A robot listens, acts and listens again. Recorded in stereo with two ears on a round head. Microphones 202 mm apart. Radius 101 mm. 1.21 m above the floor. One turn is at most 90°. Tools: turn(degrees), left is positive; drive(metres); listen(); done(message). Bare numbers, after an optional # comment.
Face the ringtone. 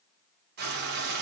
listen()
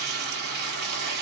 listen()
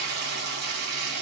done("I can't make out a ringtone, only frying.")